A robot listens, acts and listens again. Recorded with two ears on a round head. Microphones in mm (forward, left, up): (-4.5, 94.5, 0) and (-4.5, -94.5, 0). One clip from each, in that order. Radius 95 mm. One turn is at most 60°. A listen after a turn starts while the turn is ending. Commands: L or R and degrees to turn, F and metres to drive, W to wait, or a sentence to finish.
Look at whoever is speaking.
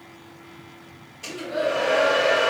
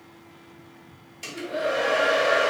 L30
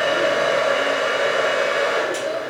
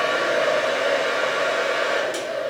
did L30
W
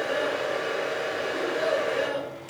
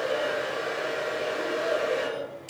L60
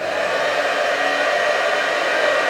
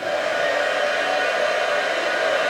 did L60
L60
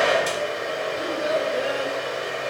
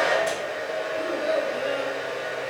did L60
L40
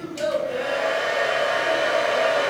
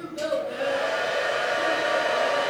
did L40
Found it: a child speaking, straight ahead.